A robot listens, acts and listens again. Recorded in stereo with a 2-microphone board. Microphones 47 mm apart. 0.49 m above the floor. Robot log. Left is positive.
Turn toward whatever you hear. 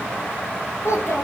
cmd yaw +90
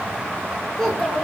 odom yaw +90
note: So it is at 10° left.
cmd yaw +10
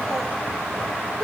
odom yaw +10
cmd idle
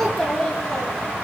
note: The child speaking is now 10° left.
cmd yaw +10
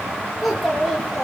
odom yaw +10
end: Found it: a child speaking, straight ahead, over 4 m away.